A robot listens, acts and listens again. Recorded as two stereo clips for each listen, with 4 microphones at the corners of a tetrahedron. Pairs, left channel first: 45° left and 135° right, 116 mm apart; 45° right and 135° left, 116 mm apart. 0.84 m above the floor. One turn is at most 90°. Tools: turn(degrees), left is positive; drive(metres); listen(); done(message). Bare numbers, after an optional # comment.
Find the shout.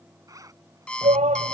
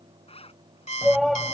# The shout: 135° right.
turn(-90)
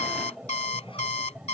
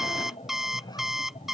# The shout is now 55° right.
turn(-55)
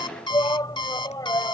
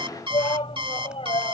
# The shout is now 10° right.
turn(-10)
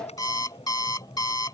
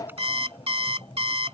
listen()
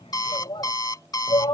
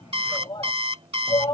done("Facing the shout.")